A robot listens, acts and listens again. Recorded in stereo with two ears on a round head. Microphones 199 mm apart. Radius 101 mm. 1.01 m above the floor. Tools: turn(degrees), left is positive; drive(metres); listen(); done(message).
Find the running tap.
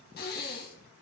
listen()
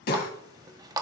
turn(degrees=-20)
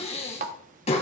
turn(degrees=-140)
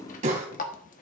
turn(degrees=35)
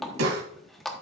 done("Facing the running tap, 1 to 2 m away.")